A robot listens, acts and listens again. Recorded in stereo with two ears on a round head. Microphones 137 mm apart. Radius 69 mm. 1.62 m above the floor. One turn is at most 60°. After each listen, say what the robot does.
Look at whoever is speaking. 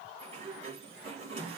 Keep listening.
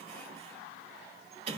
Keep listening.
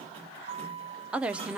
Turn 30° right.
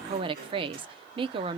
Turn 60° right.
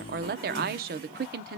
Turn 60° right.
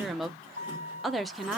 Facing the woman speaking, under 1 m away.